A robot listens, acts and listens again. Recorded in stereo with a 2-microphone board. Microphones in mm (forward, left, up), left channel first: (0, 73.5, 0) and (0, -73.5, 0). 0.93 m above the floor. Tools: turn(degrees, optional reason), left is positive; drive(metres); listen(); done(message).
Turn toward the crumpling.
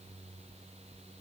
listen()
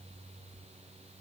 listen()
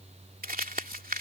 turn(degrees=-90)
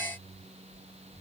listen()
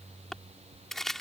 done("Found it: crumpling, straight ahead.")